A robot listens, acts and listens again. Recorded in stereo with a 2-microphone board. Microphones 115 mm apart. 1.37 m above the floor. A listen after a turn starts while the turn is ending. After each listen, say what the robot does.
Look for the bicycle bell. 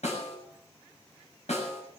Keep listening.
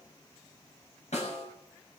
Keep listening.
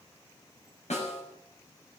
I can't make out a bicycle bell to turn to.